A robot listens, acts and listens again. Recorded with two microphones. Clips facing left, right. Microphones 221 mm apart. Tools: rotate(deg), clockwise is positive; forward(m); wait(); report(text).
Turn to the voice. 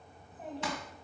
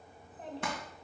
rotate(90)
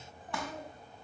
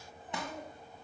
rotate(-15)
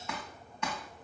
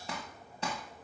wait()
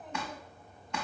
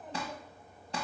wait()
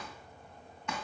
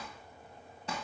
report("I heard a child speaking from this way, but can't make it out now.")